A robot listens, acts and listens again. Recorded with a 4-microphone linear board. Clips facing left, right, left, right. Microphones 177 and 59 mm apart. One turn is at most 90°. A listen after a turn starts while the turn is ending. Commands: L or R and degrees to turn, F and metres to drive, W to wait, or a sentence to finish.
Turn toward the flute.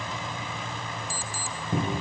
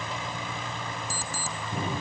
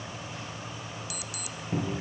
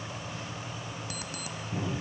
W
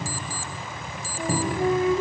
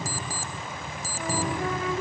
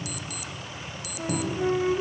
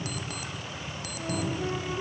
L25
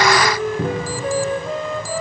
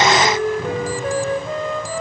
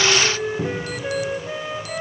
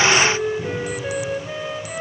Found it: a flute, straight ahead, 1 to 2 m away.